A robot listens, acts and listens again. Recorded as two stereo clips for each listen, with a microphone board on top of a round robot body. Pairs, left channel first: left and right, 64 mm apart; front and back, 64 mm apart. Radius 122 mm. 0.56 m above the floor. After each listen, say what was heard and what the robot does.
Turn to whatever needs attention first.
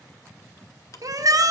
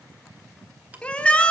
The shout: 70° right. Turn 70° right.
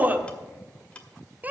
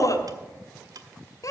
The shout is now 25° right. Turn 25° right.
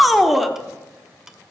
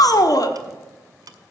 Facing the shout, 1 to 2 m away.